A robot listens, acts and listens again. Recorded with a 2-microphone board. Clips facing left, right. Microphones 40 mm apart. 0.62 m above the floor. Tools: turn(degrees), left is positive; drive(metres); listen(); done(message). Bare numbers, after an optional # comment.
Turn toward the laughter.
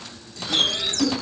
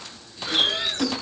# The laughter: about 25° right or 155° right.
turn(-25)
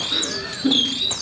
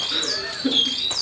done("Facing the laughter, over 4 m away.")